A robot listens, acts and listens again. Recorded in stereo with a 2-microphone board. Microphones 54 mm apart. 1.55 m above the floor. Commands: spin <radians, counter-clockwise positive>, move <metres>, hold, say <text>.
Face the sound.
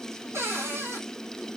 spin -1.13
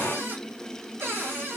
spin -0.79
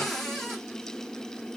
spin 0.17
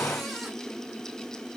hold
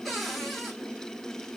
say Found it: a cupboard door, straight ahead, 2 to 4 m away.